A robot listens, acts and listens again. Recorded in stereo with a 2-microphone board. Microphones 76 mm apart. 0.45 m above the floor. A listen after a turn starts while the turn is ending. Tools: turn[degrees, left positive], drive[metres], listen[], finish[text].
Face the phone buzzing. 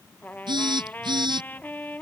Thought: The phone buzzing: about 70° right or 110° right.
Action: turn[-70]
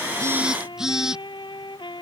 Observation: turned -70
Action: finish[Found it: a phone buzzing, straight ahead.]